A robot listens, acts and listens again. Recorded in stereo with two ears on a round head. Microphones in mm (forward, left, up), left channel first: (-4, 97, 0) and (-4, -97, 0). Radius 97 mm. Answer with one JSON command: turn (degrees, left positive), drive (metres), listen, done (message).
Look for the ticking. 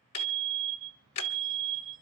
{"turn": 90}
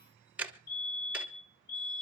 {"done": "Found it: ticking, straight ahead."}